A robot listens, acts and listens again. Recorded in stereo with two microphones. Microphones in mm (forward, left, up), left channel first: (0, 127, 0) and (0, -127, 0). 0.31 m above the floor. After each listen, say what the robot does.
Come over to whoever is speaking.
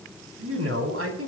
Turn 60° right.
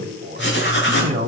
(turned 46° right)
Turn 40° right.
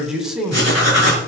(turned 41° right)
Drive 1.0 m forward.
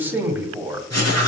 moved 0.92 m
Turn 10° right.
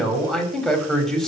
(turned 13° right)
Drive 1.0 m forward.
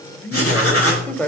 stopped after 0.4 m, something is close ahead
Turn 10° left.
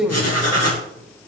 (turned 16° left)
Arrived at the man speaking, straight ahead.